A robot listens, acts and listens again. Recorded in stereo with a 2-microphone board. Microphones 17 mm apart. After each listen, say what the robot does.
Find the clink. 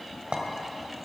Turn 90° right.
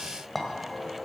Turn 10° left.
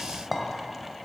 Facing the clink, 1 to 2 m away.